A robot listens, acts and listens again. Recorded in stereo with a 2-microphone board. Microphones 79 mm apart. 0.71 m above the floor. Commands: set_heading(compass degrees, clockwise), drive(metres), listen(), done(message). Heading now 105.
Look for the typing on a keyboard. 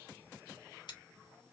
listen()
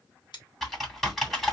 set_heading(75)
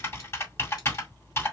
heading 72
set_heading(287)
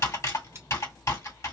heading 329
set_heading(289)
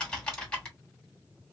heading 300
set_heading(290)
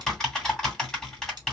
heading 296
done("Found it: typing on a keyboard, straight ahead.")